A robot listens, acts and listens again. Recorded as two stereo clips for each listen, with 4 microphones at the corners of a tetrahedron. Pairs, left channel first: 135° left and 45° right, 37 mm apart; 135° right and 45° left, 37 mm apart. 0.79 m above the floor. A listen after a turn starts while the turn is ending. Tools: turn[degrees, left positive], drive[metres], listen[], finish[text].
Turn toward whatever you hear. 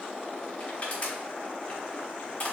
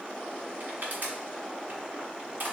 Thought: The crushing: 80° left.
Action: turn[80]
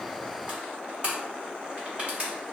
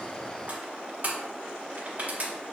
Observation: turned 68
Thought: The crushing is now 10° left.
Action: turn[10]
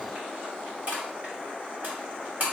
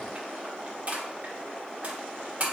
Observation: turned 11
Action: finish[Facing the crushing, 1 to 2 m away.]